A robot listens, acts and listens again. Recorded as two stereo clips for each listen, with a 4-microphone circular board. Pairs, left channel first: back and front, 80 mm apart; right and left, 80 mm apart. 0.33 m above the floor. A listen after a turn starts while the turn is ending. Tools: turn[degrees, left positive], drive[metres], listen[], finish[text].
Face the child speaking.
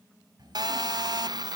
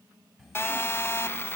Action: finish[Facing the child speaking.]